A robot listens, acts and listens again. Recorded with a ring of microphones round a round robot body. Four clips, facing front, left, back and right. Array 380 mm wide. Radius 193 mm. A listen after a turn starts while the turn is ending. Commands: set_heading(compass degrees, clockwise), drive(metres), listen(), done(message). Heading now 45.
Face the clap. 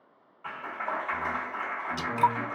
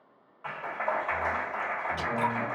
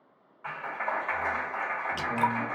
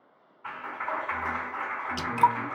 set_heading(300)
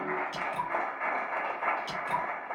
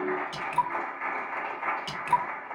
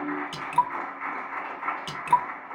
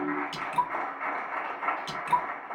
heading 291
set_heading(301)
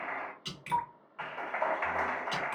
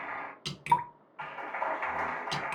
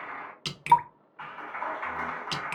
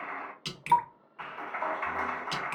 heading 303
done("Facing the clap, 2 to 4 m away.")